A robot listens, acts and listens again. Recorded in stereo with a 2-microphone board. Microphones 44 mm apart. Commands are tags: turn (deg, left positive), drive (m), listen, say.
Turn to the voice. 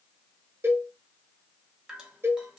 <listen/>
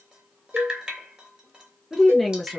<turn deg="30"/>
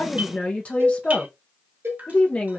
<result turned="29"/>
<turn deg="145"/>
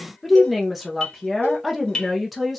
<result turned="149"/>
<say>Found it: a woman speaking, straight ahead, under 1 m away.</say>